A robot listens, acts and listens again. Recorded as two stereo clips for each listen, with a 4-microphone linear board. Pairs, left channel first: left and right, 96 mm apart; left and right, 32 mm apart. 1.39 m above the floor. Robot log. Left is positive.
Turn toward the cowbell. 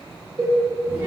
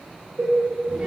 note: The cowbell: about 65° right or 115° right.
cmd yaw -65
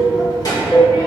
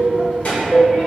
note: So it is at 20° right.
cmd yaw -20
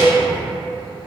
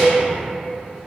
note: The cowbell is now 10° right.
cmd yaw -10
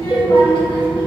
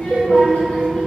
end: Facing the cowbell.